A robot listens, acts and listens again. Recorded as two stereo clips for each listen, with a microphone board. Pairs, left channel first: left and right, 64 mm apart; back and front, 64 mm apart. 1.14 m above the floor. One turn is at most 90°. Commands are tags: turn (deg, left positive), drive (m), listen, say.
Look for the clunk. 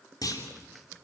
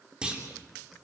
<turn deg="75"/>
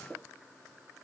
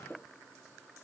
<say>I heard a clunk from this way, but can't make it out now.</say>